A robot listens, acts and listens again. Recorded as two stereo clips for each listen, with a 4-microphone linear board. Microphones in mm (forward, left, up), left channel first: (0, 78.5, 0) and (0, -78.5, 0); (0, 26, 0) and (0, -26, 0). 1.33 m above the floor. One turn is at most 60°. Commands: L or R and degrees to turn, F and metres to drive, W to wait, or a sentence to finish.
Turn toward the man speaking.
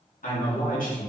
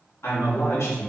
L60
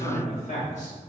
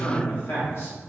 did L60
L55
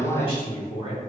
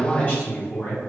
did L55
L40
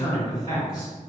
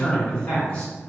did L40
L30
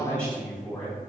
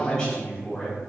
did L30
L10
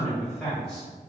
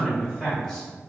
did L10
Found it: a man speaking, straight ahead.